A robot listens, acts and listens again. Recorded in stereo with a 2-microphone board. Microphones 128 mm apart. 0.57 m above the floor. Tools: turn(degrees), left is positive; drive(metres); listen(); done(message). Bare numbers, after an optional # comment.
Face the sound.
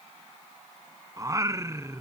# The singing: about 20° right or 160° right.
turn(-20)
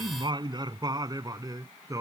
# The singing: about 25° right or 155° right.
turn(-25)
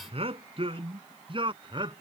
# So it is at 140° right.
turn(-140)
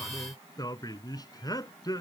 # The singing is now 30° left.
turn(30)
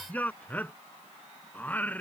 # The singing is now 15° left.
turn(15)
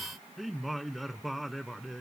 done("Found it: singing, straight ahead.")